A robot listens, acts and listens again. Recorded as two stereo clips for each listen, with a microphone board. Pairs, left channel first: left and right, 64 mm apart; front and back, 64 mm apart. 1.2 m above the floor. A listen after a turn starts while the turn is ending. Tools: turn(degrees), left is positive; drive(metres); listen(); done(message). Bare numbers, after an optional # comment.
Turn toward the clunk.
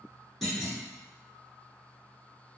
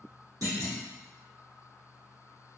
# The clunk: 175° left.
turn(175)
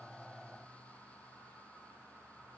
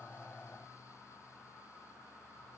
done("Facing where the clunk came from. I can't hear it now.")